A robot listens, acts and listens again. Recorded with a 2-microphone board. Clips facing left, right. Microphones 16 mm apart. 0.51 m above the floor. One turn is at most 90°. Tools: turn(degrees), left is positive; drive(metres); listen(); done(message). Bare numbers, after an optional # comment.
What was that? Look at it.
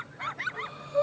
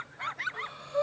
# The breathing: about 25° right or 155° right.
turn(-25)
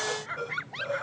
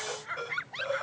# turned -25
# So it is at 130° right.
turn(-90)
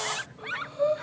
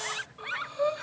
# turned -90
# The breathing is now 40° right.
turn(-40)
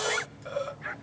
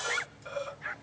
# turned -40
done("Found it: breathing, straight ahead, under 1 m away.")